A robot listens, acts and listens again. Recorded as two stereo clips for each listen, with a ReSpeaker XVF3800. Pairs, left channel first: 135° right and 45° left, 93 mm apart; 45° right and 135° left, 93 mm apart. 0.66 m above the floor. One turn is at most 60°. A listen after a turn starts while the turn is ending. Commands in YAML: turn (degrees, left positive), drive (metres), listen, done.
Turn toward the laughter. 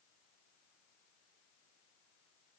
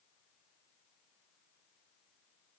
listen: true
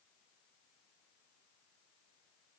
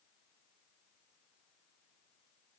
listen: true
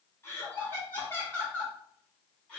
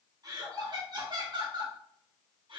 turn: 60
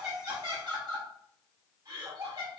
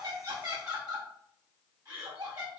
turn: 60
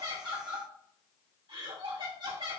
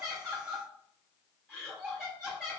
turn: 50
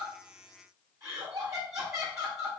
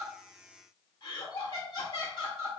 done: "Found it: laughter, straight ahead."